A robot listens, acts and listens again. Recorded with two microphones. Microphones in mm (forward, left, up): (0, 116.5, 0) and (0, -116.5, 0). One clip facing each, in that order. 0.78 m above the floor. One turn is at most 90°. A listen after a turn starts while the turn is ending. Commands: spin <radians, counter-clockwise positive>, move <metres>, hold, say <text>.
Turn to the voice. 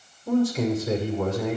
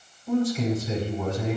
spin 1.57
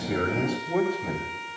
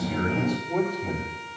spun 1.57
spin 0.17
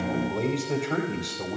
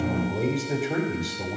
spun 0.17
say Found it: a man speaking, straight ahead, over 4 m away.